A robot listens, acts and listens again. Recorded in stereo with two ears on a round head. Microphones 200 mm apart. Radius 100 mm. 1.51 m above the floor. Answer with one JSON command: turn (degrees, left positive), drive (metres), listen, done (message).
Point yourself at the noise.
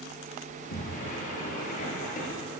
{"turn": 40}
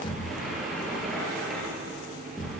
{"done": "Found it: a sliding door, straight ahead, over 4 m away."}